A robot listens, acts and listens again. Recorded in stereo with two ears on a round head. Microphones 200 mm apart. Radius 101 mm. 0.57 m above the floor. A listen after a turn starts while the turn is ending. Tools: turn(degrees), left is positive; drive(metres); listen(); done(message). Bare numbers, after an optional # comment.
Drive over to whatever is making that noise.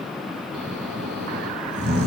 # The snoring: about 55° right or 125° right.
turn(-55)
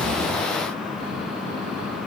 listen()
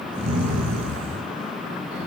# So it is at 70° right.
turn(-70)
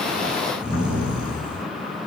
# The snoring is now 20° right.
turn(-20)
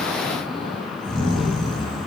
drive(1.0)
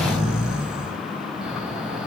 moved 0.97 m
drive(1.0)
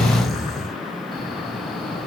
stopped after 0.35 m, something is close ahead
done("Arrived at the snoring, straight ahead.")